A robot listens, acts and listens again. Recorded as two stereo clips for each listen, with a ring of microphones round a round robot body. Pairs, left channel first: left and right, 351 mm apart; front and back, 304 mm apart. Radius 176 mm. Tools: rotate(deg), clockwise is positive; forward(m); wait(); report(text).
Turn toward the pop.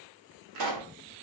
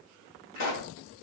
rotate(55)
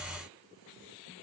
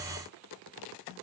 report("I heard a pop from this way, but can't make it out now.")